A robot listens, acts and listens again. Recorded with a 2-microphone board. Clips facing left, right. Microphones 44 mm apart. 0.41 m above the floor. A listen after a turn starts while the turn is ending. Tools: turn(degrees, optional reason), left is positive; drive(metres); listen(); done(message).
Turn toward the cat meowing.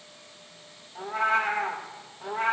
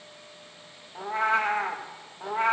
turn(degrees=-35, reason="The cat meowing: about 35° right or 145° right.")
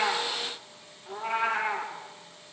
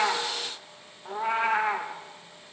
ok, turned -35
turn(degrees=-105, reason="So it is at 105° right.")
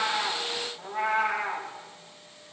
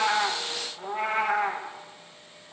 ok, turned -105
turn(degrees=-30, reason="The cat meowing is now 30° right.")
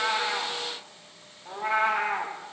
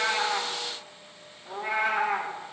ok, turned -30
turn(degrees=10, reason="The cat meowing is now 10° left.")
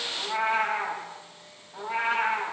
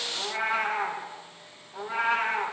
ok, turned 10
done("Found it: a cat meowing, straight ahead.")